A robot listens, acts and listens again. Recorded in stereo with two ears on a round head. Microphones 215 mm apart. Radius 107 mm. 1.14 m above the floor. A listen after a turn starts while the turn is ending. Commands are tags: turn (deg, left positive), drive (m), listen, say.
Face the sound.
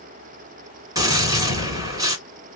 <turn deg="-15"/>
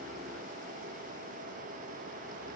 <listen/>
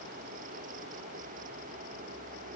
<say>I heard a gunshot, but can't make it out now. It was about straight ahead or 150° right.</say>